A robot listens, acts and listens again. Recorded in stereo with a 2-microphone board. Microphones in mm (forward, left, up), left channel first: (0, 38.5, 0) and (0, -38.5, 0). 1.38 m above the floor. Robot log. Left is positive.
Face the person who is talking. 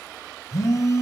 cmd idle
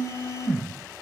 cmd idle
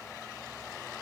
end: I can't make out anyone speaking to turn to.